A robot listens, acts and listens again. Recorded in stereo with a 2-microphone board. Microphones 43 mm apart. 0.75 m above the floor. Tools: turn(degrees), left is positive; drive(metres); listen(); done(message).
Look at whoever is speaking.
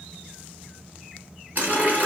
listen()
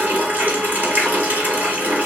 listen()
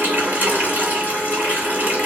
done("I can't make out anyone speaking, only a running tap.")